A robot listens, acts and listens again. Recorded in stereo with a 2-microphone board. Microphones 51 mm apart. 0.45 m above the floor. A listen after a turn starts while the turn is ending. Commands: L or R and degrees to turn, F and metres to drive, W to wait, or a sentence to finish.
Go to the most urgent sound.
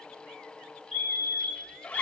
R30
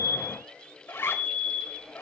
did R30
R145
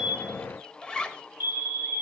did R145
R50
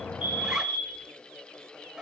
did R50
R15
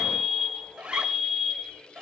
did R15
F1.0
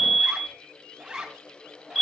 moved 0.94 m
F1.0
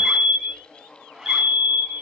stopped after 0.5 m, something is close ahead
R10
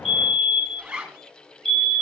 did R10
Arrived at the fire alarm, straight ahead.